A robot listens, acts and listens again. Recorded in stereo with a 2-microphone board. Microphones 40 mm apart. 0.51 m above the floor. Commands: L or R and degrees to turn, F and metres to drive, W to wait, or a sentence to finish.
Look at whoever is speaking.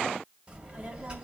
R20
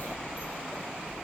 R140
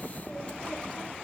L30
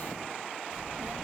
Facing the child speaking.